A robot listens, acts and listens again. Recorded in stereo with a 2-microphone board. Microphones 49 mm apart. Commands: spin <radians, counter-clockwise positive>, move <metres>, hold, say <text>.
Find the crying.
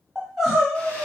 spin -0.52
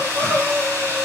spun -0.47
spin 0.35
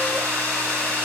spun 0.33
hold
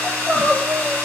say Found it: crying, straight ahead, 1 to 2 m away.